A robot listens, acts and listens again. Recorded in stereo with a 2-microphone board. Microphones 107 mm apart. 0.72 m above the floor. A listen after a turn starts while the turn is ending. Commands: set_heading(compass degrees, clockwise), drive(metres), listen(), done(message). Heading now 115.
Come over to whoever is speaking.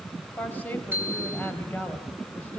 set_heading(100)
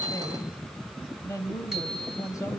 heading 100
set_heading(310)
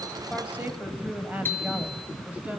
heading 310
set_heading(325)
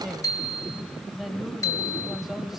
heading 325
drive(1.0)
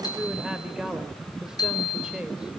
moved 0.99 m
drive(1.0)
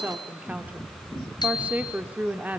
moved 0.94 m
set_heading(340)
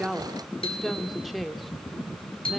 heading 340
drive(1.0)
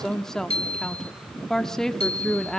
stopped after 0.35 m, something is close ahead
done("I am next to the woman speaking.")